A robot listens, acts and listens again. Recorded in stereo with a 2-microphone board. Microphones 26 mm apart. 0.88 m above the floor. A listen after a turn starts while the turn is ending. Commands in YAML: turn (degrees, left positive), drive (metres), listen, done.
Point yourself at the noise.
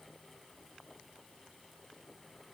listen: true
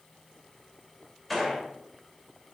turn: 30
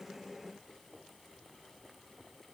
listen: true
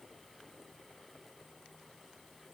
done: "I heard a gunshot, but can't make it out now. It was about 30° right or 150° left."